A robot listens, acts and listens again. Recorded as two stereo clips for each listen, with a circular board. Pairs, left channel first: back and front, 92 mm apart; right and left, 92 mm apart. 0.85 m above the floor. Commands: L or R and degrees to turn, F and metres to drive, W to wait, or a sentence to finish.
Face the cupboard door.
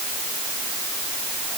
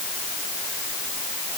W
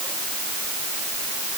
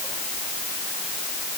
W
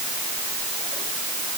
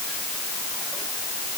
I can't make out a cupboard door.